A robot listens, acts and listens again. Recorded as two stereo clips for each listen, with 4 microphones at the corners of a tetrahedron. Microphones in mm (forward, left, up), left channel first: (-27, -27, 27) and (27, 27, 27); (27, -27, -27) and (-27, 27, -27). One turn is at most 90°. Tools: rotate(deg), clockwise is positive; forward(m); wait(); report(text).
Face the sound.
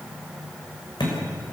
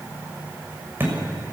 rotate(90)
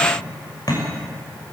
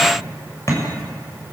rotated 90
rotate(90)
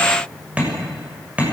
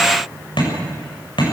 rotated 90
rotate(30)
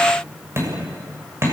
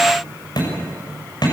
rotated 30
rotate(15)
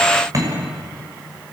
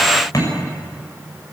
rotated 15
report("Facing the hammering, over 4 m away.")